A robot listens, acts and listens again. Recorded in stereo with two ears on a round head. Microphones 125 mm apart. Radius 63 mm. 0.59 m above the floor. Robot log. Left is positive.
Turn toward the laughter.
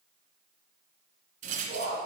note: The laughter: about 60° left or 120° left.
cmd yaw +60
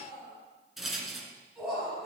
end: Facing the laughter, over 4 m away.